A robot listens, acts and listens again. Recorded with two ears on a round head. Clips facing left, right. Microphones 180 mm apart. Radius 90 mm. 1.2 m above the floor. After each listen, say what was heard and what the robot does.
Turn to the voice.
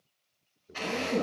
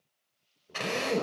The man speaking: about 25° left or 155° left. Turn 25° left.
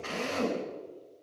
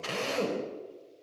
Keep listening.
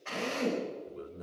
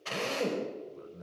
So it is at 130° left. Turn 130° left.
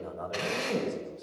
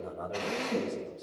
Found it: a man speaking, straight ahead.